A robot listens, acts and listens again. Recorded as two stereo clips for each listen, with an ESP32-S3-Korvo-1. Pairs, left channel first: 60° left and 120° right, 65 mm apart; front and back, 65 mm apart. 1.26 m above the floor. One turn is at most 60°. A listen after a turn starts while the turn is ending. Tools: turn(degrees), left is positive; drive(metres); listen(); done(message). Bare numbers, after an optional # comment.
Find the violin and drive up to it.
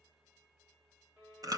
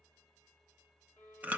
# The violin: 65° right.
turn(-60)
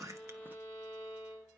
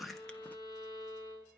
# The violin is now 15° right.
turn(-15)
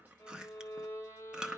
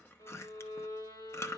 drive(1.0)
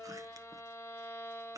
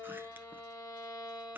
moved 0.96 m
drive(1.0)
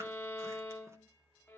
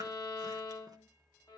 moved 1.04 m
drive(1.0)
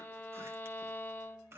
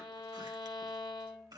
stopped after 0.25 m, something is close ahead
done("I am next to the violin.")